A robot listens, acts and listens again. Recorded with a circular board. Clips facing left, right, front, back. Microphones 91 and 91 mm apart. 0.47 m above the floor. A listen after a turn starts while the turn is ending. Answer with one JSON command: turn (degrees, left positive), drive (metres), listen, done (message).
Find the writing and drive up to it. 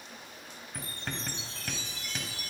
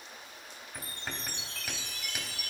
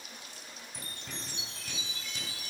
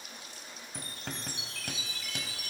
{"turn": -175}
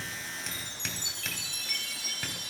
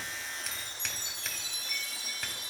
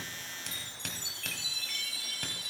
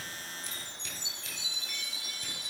{"listen": true}
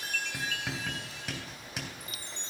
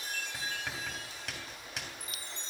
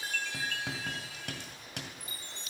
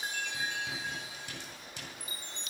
{"drive": 1.0}
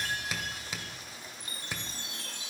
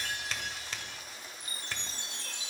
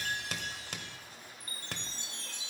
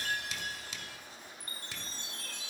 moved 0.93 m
{"turn": 10}
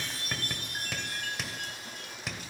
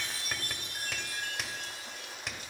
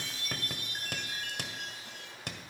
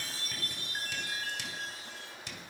{"drive": 1.0}
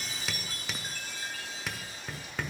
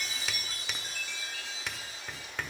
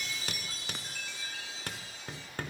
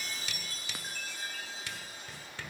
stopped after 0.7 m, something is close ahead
{"done": "I am next to the writing."}